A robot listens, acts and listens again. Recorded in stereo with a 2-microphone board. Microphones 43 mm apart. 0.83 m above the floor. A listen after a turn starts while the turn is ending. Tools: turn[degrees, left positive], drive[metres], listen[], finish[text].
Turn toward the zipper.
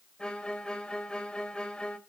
Action: listen[]
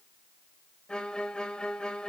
Action: listen[]
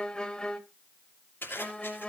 Thought: The zipper: about 60° left or 120° left.
Action: turn[60]
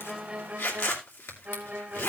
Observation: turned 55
Thought: So it is at 65° left.
Action: turn[65]
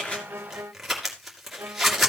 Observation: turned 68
Action: finish[Found it: a zipper, straight ahead, 2 to 4 m away.]